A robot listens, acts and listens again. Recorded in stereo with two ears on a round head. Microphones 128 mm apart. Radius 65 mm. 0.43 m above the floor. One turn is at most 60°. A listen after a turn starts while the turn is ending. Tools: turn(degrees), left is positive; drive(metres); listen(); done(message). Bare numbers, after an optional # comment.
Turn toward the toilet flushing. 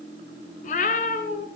listen()
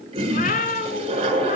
# The toilet flushing: about 40° right or 140° right.
turn(-40)
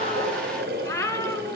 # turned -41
# So it is at 100° right.
turn(-60)
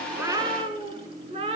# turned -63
# Nothing new. It was at 35° right.
turn(-35)
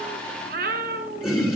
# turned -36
done("Found it: a toilet flushing, straight ahead.")